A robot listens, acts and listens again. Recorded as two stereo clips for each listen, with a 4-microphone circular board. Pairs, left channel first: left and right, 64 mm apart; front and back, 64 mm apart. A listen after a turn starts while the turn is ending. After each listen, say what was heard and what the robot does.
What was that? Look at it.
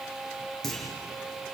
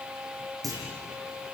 The clunk: 175° left. Turn 175° left.
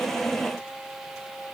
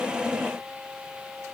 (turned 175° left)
I heard a clunk from this way, but can't make it out now.